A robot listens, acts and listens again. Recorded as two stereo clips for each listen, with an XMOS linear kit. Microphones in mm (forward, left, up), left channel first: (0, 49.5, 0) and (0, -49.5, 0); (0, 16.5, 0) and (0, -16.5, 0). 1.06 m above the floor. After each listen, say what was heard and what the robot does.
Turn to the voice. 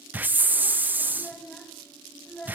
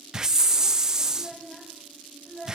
Turn 30° left.
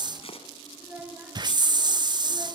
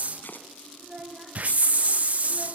So it is at 20° right. Turn 20° right.
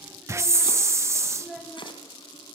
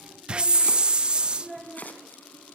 Found it: a child speaking, straight ahead.